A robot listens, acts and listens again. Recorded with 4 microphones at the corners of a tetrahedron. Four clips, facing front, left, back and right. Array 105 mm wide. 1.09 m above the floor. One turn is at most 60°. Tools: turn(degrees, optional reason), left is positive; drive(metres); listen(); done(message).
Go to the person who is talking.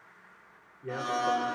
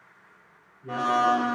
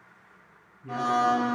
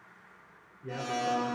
drive(metres=1.0)
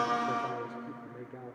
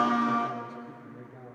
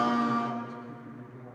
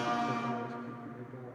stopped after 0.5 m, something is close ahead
done("Something is in my way. I am facing the man speaking but have not reached it.")